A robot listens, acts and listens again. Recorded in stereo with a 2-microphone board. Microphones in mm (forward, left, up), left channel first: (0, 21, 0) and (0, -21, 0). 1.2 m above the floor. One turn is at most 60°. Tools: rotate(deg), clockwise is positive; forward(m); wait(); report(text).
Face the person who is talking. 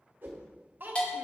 rotate(50)
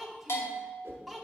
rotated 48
report("Facing the child speaking.")